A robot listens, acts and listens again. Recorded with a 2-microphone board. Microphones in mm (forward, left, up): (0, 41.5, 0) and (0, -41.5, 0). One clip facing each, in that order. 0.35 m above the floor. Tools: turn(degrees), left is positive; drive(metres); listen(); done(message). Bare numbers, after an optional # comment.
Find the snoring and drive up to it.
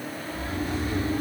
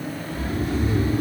# The snoring: about 40° left or 140° left.
turn(40)
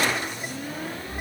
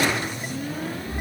# So it is at 90° left.
turn(90)
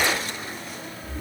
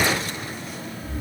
drive(1.0)
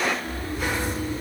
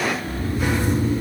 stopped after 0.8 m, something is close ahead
# The snoring is now 10° right.
turn(-10)
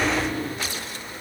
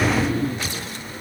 done("I am next to the snoring.")